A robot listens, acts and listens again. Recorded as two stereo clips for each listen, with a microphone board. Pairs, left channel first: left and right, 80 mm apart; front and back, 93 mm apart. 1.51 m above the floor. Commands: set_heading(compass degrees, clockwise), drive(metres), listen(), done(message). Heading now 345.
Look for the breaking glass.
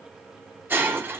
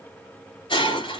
set_heading(10)
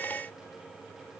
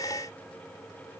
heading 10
done("I heard breaking glass from this way, but can't make it out now.")